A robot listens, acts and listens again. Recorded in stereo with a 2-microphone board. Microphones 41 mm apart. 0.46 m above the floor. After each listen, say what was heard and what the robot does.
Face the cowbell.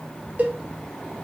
The cowbell: about 40° right or 140° right. Turn 40° right.
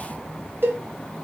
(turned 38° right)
So it is at 90° right. Turn 90° right.
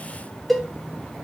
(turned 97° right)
Found it: a cowbell, straight ahead, under 1 m away.